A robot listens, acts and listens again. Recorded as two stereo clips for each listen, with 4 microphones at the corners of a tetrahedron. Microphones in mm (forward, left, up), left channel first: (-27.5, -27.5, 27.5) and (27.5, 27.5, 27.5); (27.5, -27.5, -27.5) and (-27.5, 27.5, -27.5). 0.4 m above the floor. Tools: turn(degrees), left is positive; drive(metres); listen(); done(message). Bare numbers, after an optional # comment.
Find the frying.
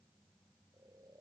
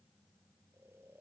listen()
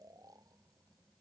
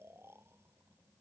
listen()
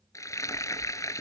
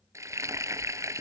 # The frying: straight behind.
turn(180)
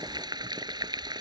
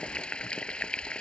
# The frying is now 30° left.
turn(30)
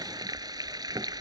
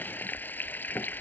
# The frying is now 20° left.
turn(20)
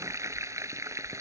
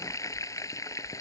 done("Found it: frying, straight ahead.")